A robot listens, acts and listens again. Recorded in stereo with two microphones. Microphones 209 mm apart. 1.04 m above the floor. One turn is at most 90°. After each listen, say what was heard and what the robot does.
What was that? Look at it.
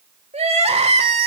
The crying: about 30° right or 150° right. Turn 30° right.
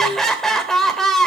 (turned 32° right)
Facing the crying.